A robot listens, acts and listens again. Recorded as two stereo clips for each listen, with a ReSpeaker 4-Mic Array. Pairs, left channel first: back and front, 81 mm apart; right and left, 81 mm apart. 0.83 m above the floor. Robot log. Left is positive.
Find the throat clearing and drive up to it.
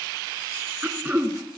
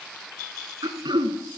note: The throat clearing: 70° left.
cmd yaw +70
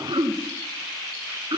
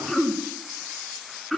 cmd fwd 1.0
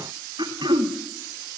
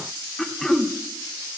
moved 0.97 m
cmd fwd 1.0
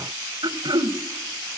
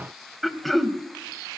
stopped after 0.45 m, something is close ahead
end: I am next to the throat clearing.